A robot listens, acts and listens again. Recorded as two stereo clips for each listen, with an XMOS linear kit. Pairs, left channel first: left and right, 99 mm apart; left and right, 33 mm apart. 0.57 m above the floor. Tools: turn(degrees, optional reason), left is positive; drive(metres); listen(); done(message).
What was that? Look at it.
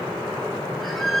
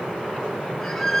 turn(degrees=30)
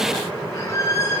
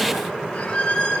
turn(degrees=145, reason="So it is at 145° left.")
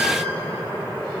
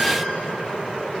listen()
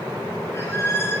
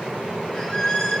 turn(degrees=25, reason="The squeak is now 25° left.")
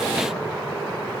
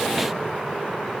listen()
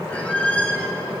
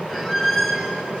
turn(degrees=15, reason="The squeak is now 15° left.")
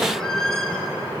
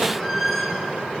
done("Found it: a squeak, straight ahead, over 4 m away.")